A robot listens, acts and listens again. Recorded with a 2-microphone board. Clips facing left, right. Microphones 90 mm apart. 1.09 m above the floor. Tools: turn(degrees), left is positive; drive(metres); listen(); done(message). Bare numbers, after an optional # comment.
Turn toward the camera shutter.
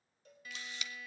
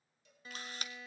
# The camera shutter: about 45° right or 135° right.
turn(-45)
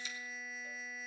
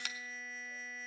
# So it is at 90° right.
turn(-90)
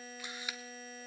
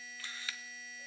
# The camera shutter is now 20° left.
turn(20)
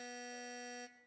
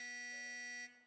listen()
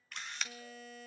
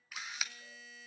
done("Found it: a camera shutter, straight ahead, 1 to 2 m away.")